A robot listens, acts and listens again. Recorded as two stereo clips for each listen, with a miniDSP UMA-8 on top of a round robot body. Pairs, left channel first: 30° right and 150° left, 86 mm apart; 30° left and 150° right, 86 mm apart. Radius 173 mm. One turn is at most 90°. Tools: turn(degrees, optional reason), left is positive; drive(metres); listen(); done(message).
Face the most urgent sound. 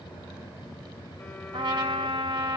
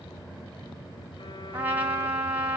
listen()
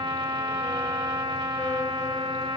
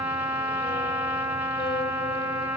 listen()
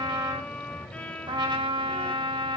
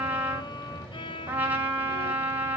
done("I can't make out anything urgent, only a trumpet and a violin.")